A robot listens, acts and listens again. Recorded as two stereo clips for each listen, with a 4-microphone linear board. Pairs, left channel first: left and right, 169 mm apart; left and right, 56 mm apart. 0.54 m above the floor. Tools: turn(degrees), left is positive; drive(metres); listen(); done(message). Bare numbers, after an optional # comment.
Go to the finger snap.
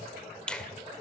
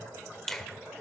turn(30)
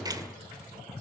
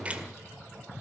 # So it is at 25° right.
turn(-25)
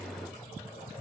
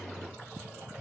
# The finger snap is now 10° left.
turn(10)
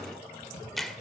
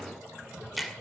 drive(1.0)
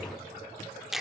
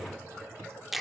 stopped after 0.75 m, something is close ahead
done("I am next to the finger snap.")